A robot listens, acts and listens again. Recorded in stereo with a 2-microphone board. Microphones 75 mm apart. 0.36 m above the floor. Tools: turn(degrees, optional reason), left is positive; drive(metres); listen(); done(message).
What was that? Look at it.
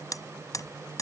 turn(degrees=55, reason="The hammering: about 55° left or 125° left.")
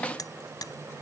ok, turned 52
listen()
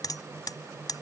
turn(degrees=70, reason="So it is at 70° left.")
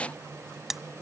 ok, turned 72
done("Found it: hammering, straight ahead.")